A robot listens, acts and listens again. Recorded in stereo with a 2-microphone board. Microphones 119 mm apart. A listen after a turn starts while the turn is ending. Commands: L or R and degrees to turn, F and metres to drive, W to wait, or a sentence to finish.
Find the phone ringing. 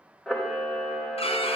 W
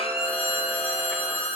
R30
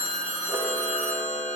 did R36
L20
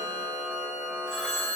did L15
Found it: a phone ringing, straight ahead.